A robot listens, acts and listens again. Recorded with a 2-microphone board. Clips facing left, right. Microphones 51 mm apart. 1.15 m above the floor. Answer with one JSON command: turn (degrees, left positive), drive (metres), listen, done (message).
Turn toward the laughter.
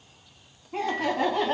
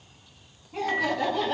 {"turn": 50}
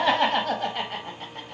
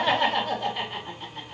{"turn": 55}
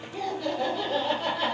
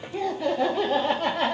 {"turn": -45}
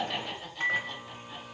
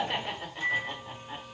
{"turn": -30}
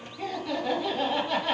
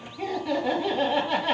{"turn": -10}
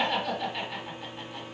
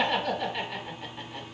{"done": "Facing the laughter, 1 to 2 m away."}